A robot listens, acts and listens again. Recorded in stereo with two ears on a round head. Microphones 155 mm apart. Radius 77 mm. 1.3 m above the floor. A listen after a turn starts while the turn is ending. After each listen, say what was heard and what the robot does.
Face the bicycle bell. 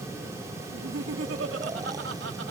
Keep listening.
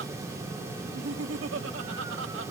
Keep listening.
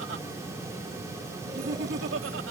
I can't make out a bicycle bell, only laughter.